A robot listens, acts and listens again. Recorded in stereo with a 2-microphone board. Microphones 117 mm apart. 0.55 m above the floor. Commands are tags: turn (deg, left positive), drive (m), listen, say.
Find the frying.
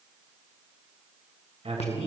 <listen/>
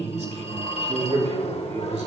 <listen/>
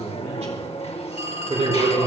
<say>I can't make out frying to turn to.</say>